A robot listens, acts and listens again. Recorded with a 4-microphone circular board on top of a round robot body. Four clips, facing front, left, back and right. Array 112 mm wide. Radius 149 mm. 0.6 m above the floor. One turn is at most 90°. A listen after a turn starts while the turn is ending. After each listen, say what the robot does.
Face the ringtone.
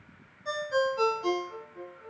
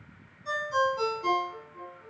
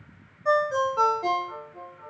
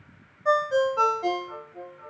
Turn 90° right.
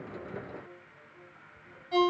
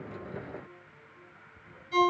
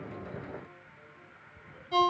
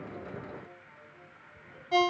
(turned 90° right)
Turn 85° right.
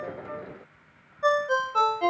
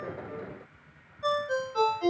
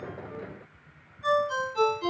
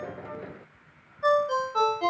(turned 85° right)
Turn 25° right.
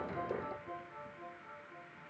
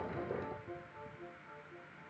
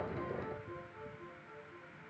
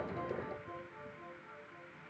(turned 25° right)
Keep listening.
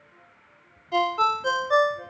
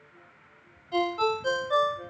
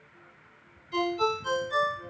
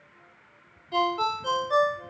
Facing the ringtone.